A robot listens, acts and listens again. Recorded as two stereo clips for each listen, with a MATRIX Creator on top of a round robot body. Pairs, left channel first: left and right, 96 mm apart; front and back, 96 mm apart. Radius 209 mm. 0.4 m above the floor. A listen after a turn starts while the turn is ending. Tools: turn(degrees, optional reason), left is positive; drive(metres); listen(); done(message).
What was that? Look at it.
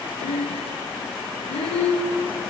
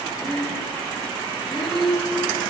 turn(degrees=85, reason="The breathing: 85° left.")
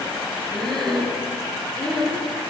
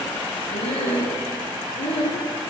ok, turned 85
done("Found it: breathing, straight ahead.")